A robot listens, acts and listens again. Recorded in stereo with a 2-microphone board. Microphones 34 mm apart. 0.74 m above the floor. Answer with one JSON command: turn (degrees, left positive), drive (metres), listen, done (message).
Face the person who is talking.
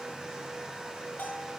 {"listen": true}
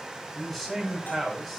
{"turn": 30}
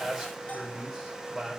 {"turn": -20}
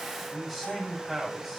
{"done": "Found it: a man speaking, straight ahead."}